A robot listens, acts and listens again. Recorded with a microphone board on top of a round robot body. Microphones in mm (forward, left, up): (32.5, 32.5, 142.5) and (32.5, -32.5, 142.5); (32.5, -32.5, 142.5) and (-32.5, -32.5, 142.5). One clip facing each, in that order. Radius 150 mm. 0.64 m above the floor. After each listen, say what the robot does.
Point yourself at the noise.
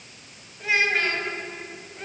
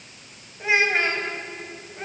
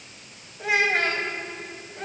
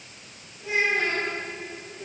Turn 25° right.
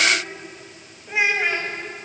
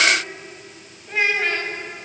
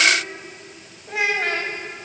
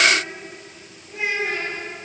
Turn 10° left.
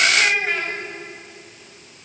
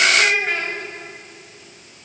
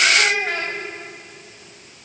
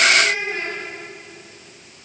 Found it: a child speaking, straight ahead, over 4 m away.